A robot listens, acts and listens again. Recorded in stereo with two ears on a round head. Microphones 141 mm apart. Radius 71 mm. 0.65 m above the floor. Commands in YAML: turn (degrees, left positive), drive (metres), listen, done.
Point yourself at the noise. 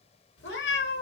turn: 90
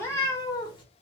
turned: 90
turn: 30
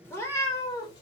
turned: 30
turn: 25
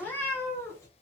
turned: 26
turn: 20
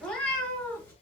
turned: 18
turn: 10
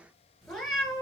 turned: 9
done: "Found it: a cat meowing, straight ahead, 2 to 4 m away."